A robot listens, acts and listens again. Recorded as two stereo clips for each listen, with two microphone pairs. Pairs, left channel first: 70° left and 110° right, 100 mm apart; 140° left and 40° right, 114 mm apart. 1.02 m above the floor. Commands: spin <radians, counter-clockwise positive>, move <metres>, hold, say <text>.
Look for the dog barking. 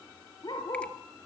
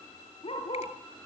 spin 1.92
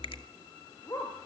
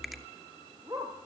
spin 0.26
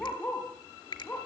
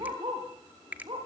say Facing the dog barking, over 4 m away.